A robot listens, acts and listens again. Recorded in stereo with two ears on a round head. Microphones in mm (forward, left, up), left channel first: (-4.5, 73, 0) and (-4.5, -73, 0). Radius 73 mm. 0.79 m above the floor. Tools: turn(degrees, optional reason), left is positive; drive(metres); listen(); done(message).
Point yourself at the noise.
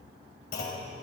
turn(degrees=60, reason="The clunk: about 60° left or 120° left.")
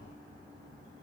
listen()
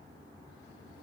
done("I heard a clunk, but can't make it out now. It was about straight ahead or 60° left.")